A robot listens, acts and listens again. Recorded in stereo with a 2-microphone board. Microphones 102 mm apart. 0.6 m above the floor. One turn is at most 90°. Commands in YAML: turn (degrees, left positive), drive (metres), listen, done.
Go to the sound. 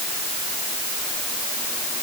listen: true
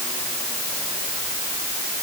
listen: true
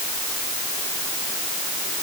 done: "I can't make out anything to turn to."